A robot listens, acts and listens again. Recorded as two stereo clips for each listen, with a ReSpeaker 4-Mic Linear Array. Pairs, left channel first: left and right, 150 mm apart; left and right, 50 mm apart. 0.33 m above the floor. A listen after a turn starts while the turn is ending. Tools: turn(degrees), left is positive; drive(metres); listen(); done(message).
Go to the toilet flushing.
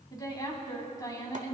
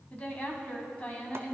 listen()
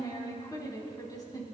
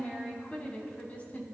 listen()
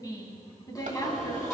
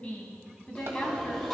turn(degrees=15)
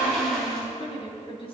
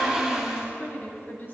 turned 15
drive(metres=1.0)
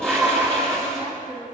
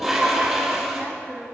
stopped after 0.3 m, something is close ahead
done("Blocked. The toilet flushing is further on, straight ahead.")